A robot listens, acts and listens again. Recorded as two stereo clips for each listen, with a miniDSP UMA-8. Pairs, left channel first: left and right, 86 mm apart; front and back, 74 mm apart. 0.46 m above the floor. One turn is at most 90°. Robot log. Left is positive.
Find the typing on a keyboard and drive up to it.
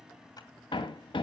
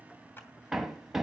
cmd idle
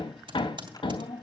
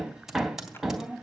note: The typing on a keyboard: 95° right.
cmd yaw -90
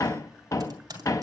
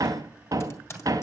note: The typing on a keyboard is now 50° right.
cmd yaw -50
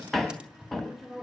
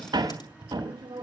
note: The typing on a keyboard is now 10° right.
cmd yaw -10
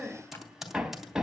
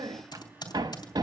cmd fwd 1.0
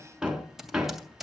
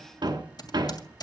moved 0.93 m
cmd fwd 1.0
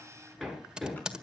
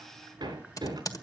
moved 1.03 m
note: The typing on a keyboard is now 10° right.
cmd yaw -10
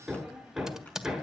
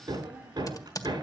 cmd fwd 1.0
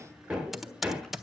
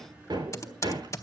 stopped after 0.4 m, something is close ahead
end: I am next to the typing on a keyboard.